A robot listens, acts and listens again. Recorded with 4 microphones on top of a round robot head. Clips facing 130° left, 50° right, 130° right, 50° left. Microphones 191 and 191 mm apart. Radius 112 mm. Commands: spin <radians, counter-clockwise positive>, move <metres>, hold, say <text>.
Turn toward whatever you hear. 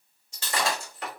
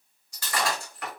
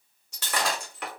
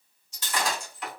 spin -2.88
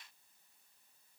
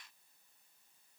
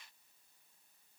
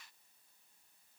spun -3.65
spin 0.79
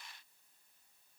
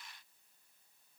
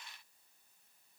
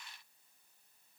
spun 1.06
spin -0.26
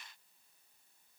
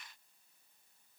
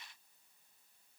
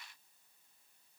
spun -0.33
say Facing where the breaking glass came from. I can't hear it now.